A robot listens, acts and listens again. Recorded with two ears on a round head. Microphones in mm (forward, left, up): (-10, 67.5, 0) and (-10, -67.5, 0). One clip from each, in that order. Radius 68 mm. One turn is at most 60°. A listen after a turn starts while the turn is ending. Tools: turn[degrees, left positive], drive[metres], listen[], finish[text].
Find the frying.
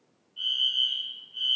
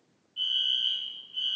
Action: listen[]
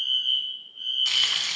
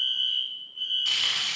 Thought: The frying: about 30° left or 150° left.
Action: turn[30]
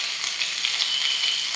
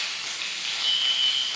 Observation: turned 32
Thought: So it is at 115° left.
Action: turn[60]
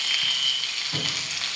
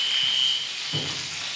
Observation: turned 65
Thought: The frying is now 55° left.
Action: turn[55]
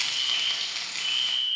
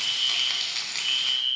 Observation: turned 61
Thought: The frying is now 10° right.
Action: turn[-10]
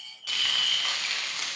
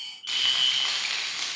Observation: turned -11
Action: finish[Facing the frying.]